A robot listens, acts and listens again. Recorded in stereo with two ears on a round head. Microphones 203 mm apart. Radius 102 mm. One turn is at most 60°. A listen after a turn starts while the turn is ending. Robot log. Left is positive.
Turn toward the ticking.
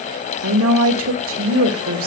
cmd idle
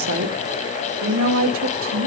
cmd idle
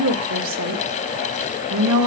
end: I can't make out ticking, only a woman speaking.